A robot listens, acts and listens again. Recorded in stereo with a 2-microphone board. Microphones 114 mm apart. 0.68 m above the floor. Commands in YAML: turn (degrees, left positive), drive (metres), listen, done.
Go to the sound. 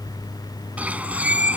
turn: -30
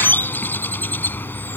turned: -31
turn: 15
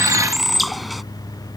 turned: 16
drive: 1.0
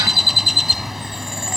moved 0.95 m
drive: 1.0
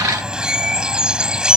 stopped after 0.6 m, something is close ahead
done: "Something is in my way. I am facing the bird but have not reached it."